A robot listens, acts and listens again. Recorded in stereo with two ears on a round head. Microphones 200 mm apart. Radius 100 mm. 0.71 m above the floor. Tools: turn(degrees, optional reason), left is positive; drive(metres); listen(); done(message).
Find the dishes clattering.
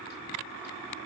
listen()
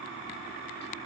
listen()
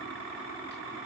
done("I can't make out dishes clattering to turn to.")